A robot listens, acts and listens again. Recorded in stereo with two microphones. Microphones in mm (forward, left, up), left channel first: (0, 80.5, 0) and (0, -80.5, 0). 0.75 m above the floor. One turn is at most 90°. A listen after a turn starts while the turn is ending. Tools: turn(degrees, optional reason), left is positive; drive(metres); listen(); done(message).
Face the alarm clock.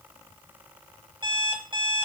turn(degrees=-30, reason="The alarm clock: about 30° right or 150° right.")
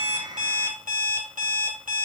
turn(degrees=-90, reason="So it is at 120° right.")
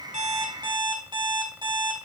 turn(degrees=-30, reason="The alarm clock is now 30° right.")
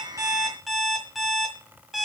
done("Found it: an alarm clock, straight ahead, 2 to 4 m away.")